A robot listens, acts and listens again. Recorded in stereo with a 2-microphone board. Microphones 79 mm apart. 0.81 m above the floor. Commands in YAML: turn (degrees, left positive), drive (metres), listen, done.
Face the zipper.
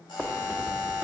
turn: -25
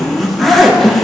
done: "Found it: a zipper, straight ahead, 1 to 2 m away."